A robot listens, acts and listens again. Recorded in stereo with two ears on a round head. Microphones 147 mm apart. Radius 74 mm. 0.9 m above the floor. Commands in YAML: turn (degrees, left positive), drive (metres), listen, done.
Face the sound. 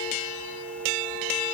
listen: true
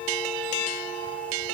listen: true
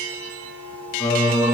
turn: 30
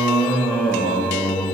turn: 30
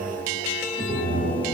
turn: -15
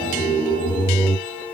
done: "Found it: singing, straight ahead."